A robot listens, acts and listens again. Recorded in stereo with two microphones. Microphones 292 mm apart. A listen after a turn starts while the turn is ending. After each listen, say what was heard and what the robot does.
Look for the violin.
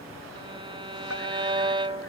The violin: about 20° right or 160° right. Turn 20° right.
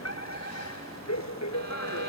Keep listening.
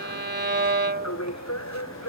So it is at 140° right. Turn 140° right.
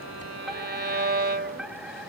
The violin is now 40° right. Turn 40° right.
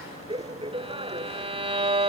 The violin is now 20° right. Turn 20° right.
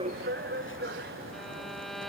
Facing the violin.